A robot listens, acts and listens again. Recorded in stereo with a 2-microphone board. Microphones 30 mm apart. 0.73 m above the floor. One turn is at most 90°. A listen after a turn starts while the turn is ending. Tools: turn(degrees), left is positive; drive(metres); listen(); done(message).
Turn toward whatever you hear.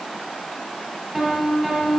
turn(degrees=-30)
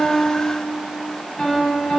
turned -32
turn(degrees=30)
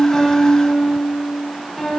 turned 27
done("Found it: a piano, straight ahead.")